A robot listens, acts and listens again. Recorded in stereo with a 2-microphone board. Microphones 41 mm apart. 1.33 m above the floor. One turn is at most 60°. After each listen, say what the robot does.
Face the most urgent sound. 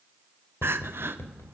Turn 60° right.
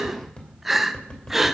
Found it: crying, straight ahead.